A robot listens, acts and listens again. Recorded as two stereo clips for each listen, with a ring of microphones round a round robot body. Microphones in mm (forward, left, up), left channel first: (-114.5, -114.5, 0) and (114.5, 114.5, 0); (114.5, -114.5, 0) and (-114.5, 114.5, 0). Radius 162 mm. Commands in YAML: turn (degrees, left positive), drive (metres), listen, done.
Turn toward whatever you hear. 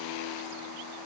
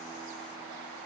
listen: true
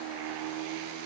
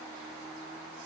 listen: true
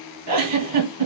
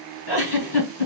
done: "Found it: a giggle, straight ahead, 2 to 4 m away."